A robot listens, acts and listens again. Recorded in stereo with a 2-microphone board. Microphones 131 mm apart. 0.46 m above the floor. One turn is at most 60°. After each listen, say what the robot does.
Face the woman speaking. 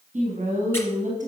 Turn 60° right.
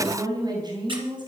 Turn 35° right.
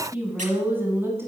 Turn 20° right.
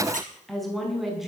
Facing the woman speaking.